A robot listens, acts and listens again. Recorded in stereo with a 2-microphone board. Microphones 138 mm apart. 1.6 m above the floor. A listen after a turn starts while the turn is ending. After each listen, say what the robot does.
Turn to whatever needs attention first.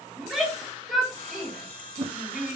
Turn 30° left.
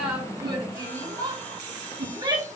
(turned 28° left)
Turn 30° right.
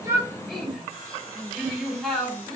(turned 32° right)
Found it: a shout, straight ahead, 2 to 4 m away.